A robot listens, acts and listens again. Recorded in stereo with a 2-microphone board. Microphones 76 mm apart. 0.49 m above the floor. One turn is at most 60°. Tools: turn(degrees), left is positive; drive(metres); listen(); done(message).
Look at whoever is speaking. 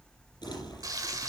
listen()
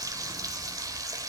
listen()
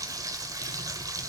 done("I can't make out anyone speaking, only frying and crumpling.")